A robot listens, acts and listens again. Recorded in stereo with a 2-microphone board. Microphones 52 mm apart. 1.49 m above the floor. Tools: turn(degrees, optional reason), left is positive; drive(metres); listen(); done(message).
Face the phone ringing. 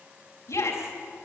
listen()
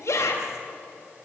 listen()
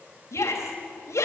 done("I can't make out a phone ringing to turn to.")